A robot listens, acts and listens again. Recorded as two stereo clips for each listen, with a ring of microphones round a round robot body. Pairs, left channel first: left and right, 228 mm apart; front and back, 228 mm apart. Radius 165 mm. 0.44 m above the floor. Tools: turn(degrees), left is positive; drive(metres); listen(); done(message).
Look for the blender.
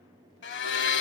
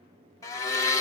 turn(degrees=75)
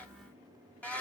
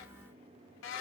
done("Found it: a blender, straight ahead, 1 to 2 m away.")